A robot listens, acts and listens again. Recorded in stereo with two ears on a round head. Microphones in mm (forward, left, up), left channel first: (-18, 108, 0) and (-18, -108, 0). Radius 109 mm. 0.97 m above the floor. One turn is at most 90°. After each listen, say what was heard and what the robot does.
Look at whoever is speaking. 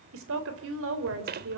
The woman speaking: about 55° right or 125° right. Turn 55° right.
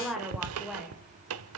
Found it: a woman speaking, straight ahead, over 4 m away.